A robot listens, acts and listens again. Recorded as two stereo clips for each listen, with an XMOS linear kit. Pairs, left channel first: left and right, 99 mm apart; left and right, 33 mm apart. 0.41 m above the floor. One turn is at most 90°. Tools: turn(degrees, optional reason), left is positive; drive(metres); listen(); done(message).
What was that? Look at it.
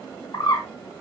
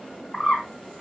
turn(degrees=45, reason="The bird: about 45° left or 135° left.")
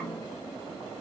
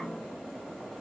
listen()
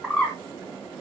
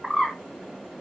done("Facing the bird, 2 to 4 m away.")